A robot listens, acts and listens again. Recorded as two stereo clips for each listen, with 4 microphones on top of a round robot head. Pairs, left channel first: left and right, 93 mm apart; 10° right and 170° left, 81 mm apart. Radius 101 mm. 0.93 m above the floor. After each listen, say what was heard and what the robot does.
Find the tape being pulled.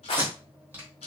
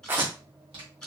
The tape being pulled: 155° right. Turn 155° right.
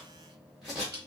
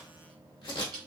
Found it: tape being pulled, straight ahead.